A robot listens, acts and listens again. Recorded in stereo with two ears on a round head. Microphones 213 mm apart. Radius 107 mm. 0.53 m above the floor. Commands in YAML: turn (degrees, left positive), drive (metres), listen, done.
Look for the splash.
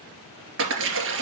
turn: -55
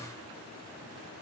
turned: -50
listen: true
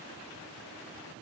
done: "I heard a splash, but can't make it out now. It was about 5° right or 75° right."